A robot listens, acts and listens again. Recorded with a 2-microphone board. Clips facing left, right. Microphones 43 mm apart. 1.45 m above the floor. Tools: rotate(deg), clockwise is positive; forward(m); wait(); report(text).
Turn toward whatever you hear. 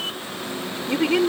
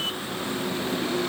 rotate(-90)
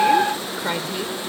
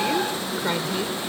report("Facing the woman speaking.")